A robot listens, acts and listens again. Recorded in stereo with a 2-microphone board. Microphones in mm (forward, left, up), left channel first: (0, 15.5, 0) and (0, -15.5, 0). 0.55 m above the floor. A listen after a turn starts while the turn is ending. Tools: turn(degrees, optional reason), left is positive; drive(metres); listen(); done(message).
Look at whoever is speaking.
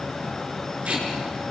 listen()
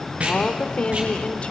turn(degrees=40, reason="The woman speaking: about 40° left or 140° left.")
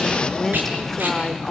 turn(degrees=10, reason="So it is at 10° left.")
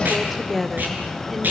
done("Found it: a woman speaking, straight ahead.")